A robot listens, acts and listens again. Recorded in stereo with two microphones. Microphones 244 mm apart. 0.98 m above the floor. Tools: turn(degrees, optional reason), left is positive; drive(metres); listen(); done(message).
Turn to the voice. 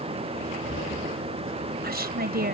turn(degrees=-40, reason="The woman speaking: about 40° right or 140° right.")
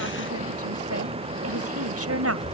turn(degrees=-100, reason="So it is at 100° right.")
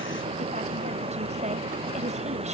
listen()
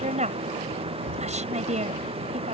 turn(degrees=-30, reason="The woman speaking is now 30° right.")
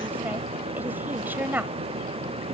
turn(degrees=-10, reason="The woman speaking is now 10° right.")
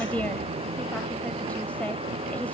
listen()
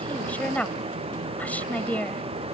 done("Found it: a woman speaking, straight ahead.")